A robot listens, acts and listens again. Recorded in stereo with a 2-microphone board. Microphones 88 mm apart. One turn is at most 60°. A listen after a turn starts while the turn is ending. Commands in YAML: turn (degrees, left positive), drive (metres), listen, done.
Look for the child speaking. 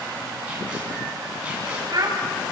turn: -50
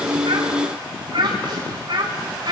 turn: -60
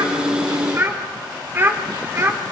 turn: -25
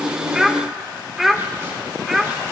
done: "Facing the child speaking."